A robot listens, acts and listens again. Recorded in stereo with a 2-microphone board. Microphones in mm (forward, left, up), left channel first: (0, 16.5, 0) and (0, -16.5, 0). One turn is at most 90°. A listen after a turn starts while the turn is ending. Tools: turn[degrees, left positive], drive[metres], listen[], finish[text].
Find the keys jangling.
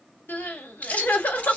Thought: The keys jangling: about 45° left or 135° left.
Action: turn[45]
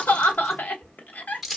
Action: finish[Facing the keys jangling.]